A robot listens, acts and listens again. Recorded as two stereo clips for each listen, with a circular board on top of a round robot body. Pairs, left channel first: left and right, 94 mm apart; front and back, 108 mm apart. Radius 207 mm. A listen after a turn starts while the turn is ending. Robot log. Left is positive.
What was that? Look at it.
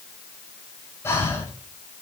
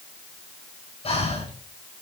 note: The breathing: 25° left.
cmd yaw +25
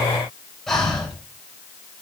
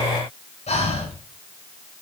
end: Found it: breathing, straight ahead.